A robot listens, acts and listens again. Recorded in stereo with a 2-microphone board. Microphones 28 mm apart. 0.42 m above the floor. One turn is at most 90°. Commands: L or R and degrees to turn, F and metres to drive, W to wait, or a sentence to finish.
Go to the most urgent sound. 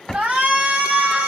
R60
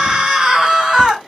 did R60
R25
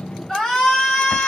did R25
L20
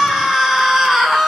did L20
F1.0
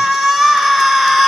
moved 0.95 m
F1.0
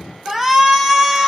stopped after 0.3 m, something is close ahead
I am next to the shout.